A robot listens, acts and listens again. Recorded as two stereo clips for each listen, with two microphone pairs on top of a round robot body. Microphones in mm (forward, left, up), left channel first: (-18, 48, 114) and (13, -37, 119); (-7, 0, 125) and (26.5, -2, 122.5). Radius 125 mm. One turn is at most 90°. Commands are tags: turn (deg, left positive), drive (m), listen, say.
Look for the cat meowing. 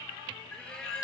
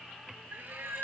<turn deg="30"/>
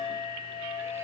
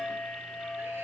<listen/>
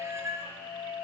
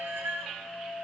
<turn deg="-10"/>
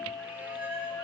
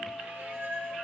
<listen/>
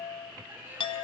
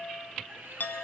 <listen/>
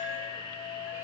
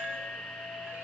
<say>Facing where the cat meowing came from. I can't hear it now.</say>